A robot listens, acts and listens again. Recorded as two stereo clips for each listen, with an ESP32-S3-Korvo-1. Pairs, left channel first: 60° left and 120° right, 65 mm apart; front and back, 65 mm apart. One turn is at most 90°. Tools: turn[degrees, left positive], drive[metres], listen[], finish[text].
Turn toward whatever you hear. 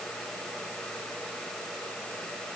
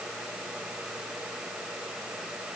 Action: listen[]
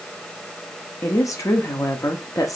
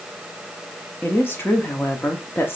Thought: The woman speaking: 50° left.
Action: turn[50]
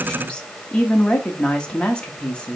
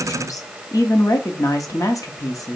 Thought: The woman speaking is now 10° right.
Action: turn[-10]
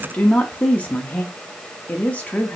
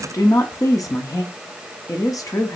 Action: finish[Found it: a woman speaking, straight ahead, under 1 m away.]